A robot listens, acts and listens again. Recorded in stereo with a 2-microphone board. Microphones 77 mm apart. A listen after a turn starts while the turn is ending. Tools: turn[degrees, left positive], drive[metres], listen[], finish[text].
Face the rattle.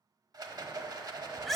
Thought: The rattle: about 55° right or 125° right.
Action: turn[-55]
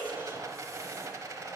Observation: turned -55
Thought: So it is at 55° right.
Action: turn[-55]
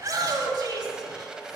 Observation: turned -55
Thought: The rattle is now 15° right.
Action: turn[-15]
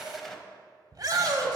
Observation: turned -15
Action: finish[Facing the rattle.]